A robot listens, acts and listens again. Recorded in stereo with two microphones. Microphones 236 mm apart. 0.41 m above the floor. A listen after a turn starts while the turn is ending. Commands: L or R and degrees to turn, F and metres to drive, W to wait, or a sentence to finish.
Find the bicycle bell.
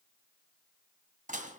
W
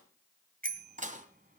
R40
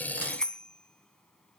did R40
Facing the bicycle bell, 2 to 4 m away.